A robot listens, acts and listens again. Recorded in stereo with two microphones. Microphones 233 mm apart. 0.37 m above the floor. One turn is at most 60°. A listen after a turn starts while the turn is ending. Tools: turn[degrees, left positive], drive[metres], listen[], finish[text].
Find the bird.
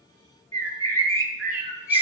Thought: The bird: about 70° left or 110° left.
Action: turn[60]
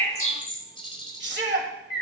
Thought: So it is at 25° left.
Action: turn[25]
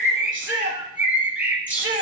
Action: finish[Facing the bird.]